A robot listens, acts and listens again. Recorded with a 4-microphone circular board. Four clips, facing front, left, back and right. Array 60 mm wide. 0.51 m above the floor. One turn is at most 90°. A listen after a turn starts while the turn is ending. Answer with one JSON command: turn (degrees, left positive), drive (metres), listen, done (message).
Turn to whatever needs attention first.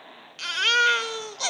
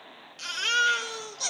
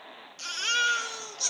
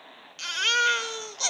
{"turn": -20}
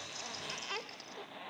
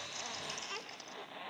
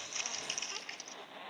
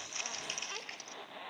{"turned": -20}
{"listen": true}
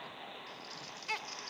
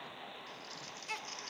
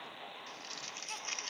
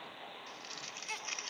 {"done": "Found it: a baby crying, straight ahead, under 1 m away."}